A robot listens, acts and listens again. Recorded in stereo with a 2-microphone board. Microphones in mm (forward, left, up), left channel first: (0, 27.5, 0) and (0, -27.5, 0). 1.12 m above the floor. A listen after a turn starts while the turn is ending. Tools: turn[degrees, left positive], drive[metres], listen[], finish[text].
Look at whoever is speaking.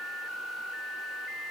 Action: listen[]
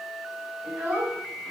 Thought: The child speaking: about 20° right or 160° right.
Action: turn[-20]
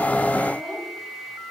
Action: finish[Facing the child speaking, over 4 m away.]